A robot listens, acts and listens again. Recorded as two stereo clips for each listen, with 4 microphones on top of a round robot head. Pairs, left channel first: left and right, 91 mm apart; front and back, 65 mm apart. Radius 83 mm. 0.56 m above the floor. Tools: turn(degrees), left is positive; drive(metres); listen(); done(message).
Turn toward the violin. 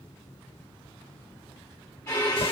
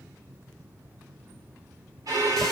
turn(degrees=160)
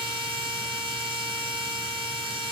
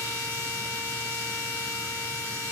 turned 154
listen()
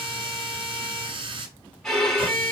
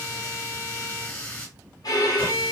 done("Found it: a violin, straight ahead.")